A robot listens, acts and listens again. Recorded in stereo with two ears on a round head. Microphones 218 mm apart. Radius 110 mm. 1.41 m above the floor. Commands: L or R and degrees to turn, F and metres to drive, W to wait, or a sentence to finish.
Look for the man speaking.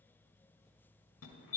W
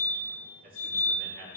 R50
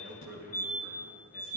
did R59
R50
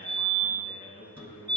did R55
L35
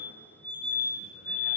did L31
W
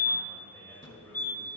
L10
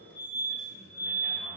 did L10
W
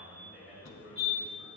Facing the man speaking.